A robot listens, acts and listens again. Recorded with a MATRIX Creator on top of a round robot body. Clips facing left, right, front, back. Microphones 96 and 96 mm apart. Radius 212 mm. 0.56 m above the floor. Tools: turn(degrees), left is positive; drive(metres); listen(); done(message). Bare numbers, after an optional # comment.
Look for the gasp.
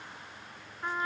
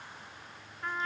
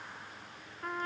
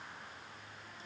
listen()
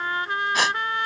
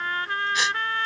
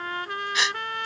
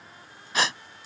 # The gasp: 130° left.
turn(130)
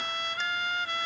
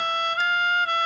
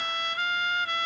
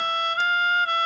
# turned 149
# Nothing new. It was at 20° right.
turn(-20)
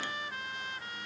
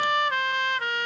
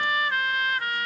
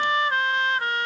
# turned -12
done("I heard a gasp from this way, but can't make it out now.")